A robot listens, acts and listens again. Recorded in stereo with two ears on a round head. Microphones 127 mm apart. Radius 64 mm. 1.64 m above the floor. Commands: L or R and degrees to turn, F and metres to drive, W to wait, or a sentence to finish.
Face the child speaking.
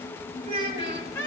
R45
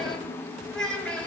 Facing the child speaking.